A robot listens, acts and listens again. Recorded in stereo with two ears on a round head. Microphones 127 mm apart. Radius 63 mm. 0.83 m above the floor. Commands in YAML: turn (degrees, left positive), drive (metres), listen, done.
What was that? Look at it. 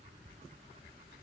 listen: true
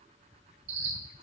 turn: -90
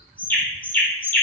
turn: 10
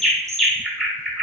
done: "Found it: a bird, straight ahead, 1 to 2 m away."